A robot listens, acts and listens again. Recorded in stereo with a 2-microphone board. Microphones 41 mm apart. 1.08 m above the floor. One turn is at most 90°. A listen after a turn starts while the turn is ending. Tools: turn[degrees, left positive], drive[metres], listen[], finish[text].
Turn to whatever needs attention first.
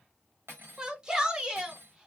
Thought: The shout: about 20° right or 160° right.
Action: turn[-20]
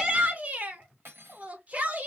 Thought: So it is at 140° right.
Action: turn[-90]
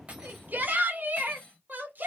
Thought: The shout is now 50° right.
Action: turn[-50]
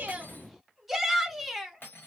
Action: finish[Found it: a shout, straight ahead.]